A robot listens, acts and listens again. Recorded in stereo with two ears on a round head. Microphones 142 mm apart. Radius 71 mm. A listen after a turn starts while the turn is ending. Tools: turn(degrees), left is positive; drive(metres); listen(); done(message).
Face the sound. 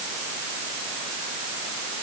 listen()
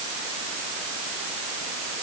listen()
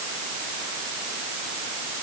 done("I can't make out anything to turn to.")